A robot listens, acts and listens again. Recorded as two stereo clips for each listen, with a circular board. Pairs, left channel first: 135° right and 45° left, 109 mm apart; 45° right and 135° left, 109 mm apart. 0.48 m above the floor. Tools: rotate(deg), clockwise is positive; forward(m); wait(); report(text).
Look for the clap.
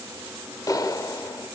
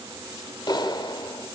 rotate(85)
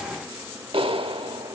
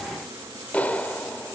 rotate(-30)
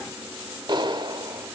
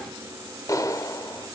rotate(-10)
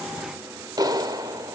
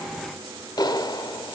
report("Found it: a clap, straight ahead, 1 to 2 m away.")